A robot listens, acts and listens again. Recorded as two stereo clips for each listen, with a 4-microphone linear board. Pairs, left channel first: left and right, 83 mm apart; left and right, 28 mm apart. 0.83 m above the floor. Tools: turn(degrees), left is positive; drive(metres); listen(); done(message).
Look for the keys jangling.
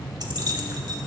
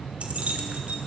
turn(degrees=-60)
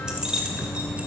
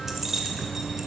turn(degrees=-10)
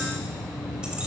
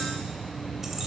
listen()
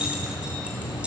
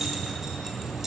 turn(degrees=-15)
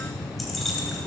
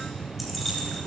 done("Found it: keys jangling, straight ahead, 2 to 4 m away.")